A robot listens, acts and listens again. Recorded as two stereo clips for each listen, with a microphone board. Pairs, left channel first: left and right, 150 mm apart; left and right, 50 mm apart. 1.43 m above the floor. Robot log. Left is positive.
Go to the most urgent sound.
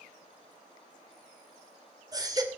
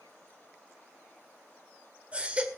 note: The baby crying: about 25° right or 155° right.
cmd yaw -25
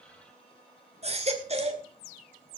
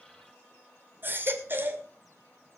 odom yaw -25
note: So it is at 130° right.
cmd yaw -130
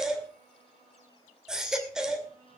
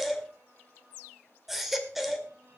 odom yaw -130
cmd fwd 1.0
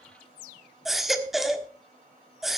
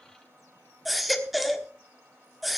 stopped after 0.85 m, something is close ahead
end: I am next to the baby crying.